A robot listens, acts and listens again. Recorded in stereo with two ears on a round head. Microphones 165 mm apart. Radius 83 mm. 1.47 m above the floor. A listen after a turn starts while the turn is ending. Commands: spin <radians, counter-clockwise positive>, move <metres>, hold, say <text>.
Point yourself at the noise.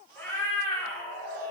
spin 0.52
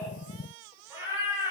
spin -0.35
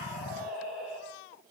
say Found it: a cat meowing, straight ahead, 1 to 2 m away.